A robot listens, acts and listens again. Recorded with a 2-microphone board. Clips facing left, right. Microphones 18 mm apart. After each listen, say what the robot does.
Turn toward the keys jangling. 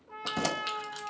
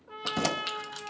Turn 15° right.
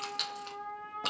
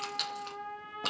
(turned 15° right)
Found it: keys jangling, straight ahead, under 1 m away.